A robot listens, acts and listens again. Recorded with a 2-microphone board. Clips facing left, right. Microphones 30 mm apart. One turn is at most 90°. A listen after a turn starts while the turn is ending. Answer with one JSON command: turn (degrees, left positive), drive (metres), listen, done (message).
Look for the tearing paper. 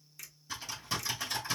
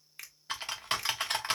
{"listen": true}
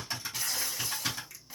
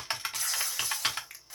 {"turn": 30}
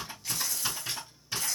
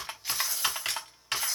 {"turn": -20}
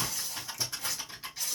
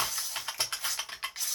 {"done": "Found it: tearing paper, straight ahead, 2 to 4 m away."}